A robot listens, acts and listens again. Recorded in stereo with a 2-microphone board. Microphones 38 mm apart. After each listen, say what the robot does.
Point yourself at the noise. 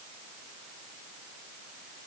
Keep listening.
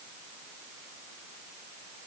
Keep listening.
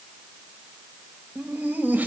Turn 45° right.
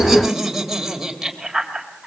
Turn 10° right.
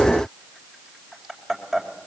Facing the laughter, 2 to 4 m away.